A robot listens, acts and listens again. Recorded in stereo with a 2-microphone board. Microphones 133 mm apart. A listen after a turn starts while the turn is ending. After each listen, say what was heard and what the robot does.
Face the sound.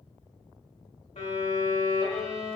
The violin: about 55° left or 125° left. Turn 55° left.
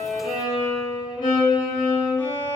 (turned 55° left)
So it is at 45° left. Turn 45° left.
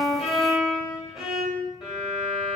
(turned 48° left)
Found it: a violin, straight ahead.